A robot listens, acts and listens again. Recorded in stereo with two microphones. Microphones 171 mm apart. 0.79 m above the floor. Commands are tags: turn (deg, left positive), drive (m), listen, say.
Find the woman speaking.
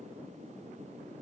<listen/>
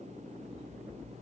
<listen/>
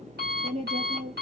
<turn deg="-45"/>
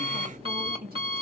<turn deg="-85"/>
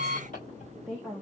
<say>Found it: a woman speaking, straight ahead.</say>